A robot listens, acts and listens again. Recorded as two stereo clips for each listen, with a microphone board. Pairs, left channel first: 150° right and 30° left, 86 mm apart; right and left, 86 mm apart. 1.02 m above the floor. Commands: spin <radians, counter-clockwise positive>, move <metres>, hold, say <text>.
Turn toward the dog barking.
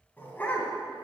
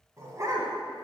spin 2.44
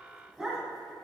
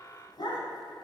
spin -0.96
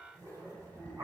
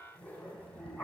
spin -0.35
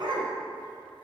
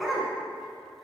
say Found it: a dog barking, straight ahead, 2 to 4 m away.